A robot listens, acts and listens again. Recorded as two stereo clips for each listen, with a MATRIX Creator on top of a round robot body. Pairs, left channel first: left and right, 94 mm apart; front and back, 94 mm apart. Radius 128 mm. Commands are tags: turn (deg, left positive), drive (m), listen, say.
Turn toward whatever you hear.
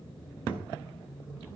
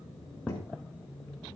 <turn deg="-20"/>
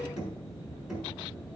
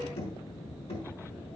<say>Found it: knocking, straight ahead.</say>